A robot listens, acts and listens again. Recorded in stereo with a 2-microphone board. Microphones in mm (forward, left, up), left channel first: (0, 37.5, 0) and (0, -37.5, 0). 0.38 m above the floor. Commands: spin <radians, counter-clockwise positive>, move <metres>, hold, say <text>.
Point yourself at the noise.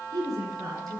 spin -0.96
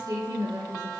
spin -1.13
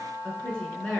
spin 0.26
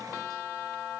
hold
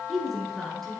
say Found it: a woman speaking, straight ahead.